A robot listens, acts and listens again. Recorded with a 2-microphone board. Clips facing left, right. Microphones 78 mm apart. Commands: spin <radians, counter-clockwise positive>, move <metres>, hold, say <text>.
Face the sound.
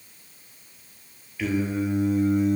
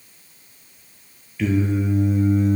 spin 0.52
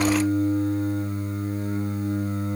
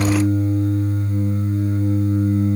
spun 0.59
spin 2.53
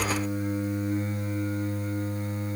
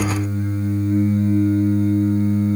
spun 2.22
spin 0.35
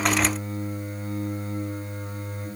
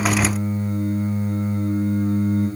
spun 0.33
say Facing the singing.